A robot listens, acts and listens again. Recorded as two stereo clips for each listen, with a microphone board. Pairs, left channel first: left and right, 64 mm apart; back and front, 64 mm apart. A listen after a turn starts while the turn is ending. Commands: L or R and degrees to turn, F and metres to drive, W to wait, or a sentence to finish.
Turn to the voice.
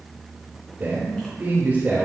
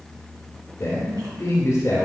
R145
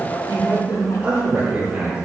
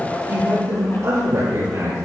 R25
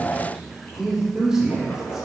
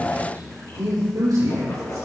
Found it: a man speaking, straight ahead.